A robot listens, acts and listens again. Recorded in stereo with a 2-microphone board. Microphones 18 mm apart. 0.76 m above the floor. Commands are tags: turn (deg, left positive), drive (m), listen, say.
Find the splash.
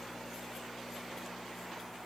<listen/>
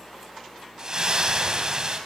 <turn deg="-35"/>
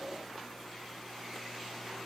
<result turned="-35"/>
<listen/>
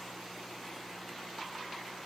<say>I heard a splash, but can't make it out now. It was about straight ahead or 110° right.</say>